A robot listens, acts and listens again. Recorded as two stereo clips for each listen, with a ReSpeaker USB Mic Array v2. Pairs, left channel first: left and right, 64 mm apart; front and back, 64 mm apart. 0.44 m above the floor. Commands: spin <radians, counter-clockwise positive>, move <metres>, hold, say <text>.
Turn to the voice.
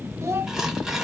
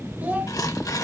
spin -2.09
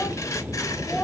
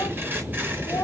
spin 0.26
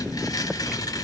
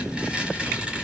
hold
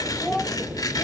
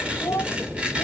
say Facing the child speaking, 1 to 2 m away.